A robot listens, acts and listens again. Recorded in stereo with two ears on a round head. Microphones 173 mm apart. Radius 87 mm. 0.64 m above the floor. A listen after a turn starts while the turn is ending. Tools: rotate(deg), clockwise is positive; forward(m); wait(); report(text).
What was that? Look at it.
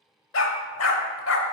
rotate(-90)
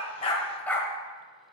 rotate(-10)
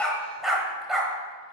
report("Found it: a dog barking, straight ahead.")